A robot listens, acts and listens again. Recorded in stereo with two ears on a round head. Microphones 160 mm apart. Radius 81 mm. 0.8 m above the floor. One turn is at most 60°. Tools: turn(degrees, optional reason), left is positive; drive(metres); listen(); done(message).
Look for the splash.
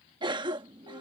listen()
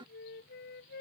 listen()
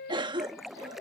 turn(degrees=30)
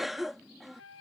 listen()
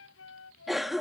done("I heard a splash, but can't make it out now. It was about 30° right or 150° left.")